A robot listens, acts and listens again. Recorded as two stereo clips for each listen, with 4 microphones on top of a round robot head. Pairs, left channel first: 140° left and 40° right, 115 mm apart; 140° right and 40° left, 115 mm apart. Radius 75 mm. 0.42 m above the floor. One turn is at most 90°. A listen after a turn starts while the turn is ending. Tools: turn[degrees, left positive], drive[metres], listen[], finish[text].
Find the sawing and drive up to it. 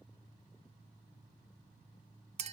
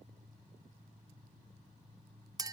Action: listen[]
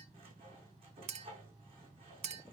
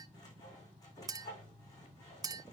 Thought: The sawing: 85° right.
Action: turn[-85]
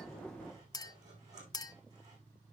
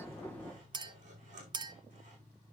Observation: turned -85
Action: listen[]
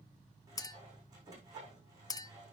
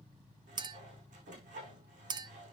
Thought: The sawing is now 25° left.
Action: turn[25]
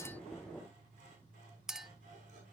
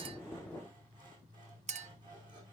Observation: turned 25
Action: listen[]
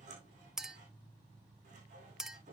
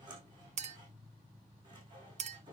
Thought: The sawing is now 15° right.
Action: turn[-15]
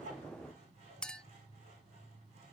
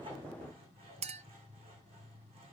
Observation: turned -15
Action: listen[]
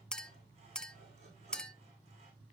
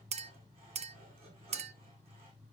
Action: listen[]
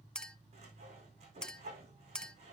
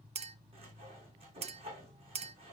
Action: drive[1.0]
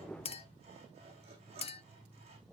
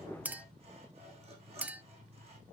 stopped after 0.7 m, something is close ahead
Action: finish[Something is in my way. I am facing the sawing but have not reached it.]